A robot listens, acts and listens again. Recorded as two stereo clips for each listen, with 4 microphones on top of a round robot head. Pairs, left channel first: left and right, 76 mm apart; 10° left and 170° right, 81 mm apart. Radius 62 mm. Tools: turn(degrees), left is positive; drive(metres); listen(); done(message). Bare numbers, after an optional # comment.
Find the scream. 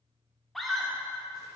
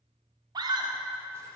# The scream: 175° left.
turn(175)
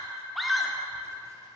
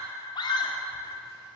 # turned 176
done("Facing the scream.")